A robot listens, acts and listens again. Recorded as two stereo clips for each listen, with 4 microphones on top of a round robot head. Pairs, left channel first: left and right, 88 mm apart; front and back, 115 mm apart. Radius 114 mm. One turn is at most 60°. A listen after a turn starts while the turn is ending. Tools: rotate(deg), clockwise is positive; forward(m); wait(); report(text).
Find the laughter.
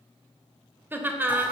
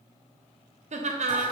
rotate(60)
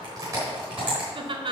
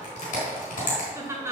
rotate(60)
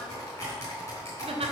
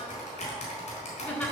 rotate(60)
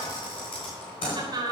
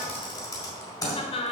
rotate(45)
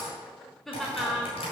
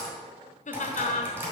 report("Found it: laughter, straight ahead, 1 to 2 m away.")